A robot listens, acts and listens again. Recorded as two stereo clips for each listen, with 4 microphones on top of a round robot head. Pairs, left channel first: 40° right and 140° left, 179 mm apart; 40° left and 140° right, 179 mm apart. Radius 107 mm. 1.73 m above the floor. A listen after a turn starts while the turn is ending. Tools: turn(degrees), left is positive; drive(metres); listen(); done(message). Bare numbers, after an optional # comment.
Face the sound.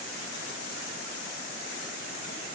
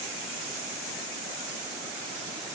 listen()
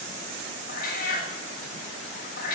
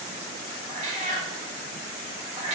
# The cat meowing: 85° right.
turn(-85)
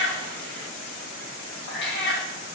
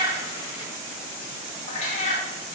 # The cat meowing is now 10° right.
turn(-10)
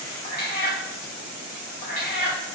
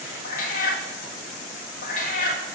done("Facing the cat meowing, 1 to 2 m away.")